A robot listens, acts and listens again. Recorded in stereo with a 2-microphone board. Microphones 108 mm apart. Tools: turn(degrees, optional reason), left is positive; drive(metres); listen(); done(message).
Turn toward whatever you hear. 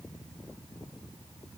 listen()
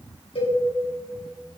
turn(degrees=60, reason="The cowbell: about 60° left or 120° left.")
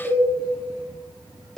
done("Facing the cowbell, 2 to 4 m away.")